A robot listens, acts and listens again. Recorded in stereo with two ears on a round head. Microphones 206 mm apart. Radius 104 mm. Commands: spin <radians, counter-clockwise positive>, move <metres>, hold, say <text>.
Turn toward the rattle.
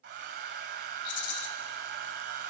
spin 1.31
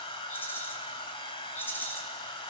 spin 0.17
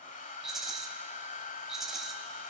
say Facing the rattle, 1 to 2 m away.